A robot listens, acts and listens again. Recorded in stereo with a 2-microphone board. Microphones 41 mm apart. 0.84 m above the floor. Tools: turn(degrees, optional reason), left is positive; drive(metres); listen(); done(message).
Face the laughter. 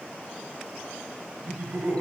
turn(degrees=-50, reason="The laughter: about 50° right or 130° right.")
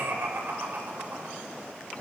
turn(degrees=-75, reason="So it is at 75° right.")
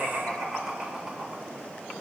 turn(degrees=-20, reason="The laughter is now 20° right.")
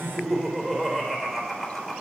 done("Facing the laughter.")